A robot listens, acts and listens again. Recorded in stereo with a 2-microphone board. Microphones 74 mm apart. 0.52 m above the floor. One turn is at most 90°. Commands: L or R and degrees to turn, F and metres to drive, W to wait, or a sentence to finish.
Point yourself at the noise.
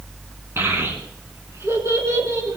R45
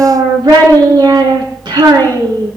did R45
R90
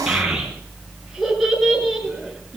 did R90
Facing the child speaking.